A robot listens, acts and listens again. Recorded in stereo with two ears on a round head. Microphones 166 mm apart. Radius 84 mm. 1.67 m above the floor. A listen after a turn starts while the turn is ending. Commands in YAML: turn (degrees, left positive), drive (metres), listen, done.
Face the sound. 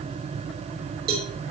turn: -50
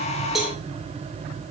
done: "Facing the cowbell, 2 to 4 m away."